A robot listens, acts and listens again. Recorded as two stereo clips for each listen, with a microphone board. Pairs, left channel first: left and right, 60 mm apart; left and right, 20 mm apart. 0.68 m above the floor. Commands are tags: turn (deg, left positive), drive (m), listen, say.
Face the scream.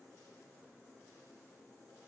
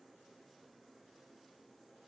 <listen/>
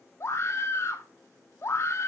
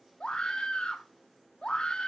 <turn deg="45"/>
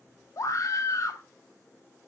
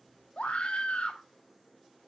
<turn deg="80"/>
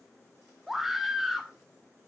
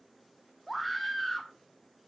<say>Facing the scream.</say>